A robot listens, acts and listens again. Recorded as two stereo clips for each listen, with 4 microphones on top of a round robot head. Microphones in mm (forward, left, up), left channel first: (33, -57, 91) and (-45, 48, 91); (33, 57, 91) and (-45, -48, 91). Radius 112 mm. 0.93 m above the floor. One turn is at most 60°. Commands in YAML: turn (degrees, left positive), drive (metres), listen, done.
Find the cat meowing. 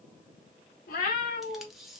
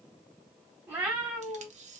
turn: -40
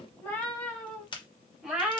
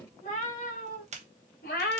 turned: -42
turn: 50
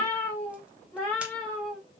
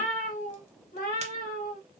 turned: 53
turn: 35
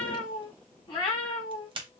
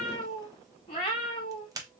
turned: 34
done: "Facing the cat meowing, 1 to 2 m away."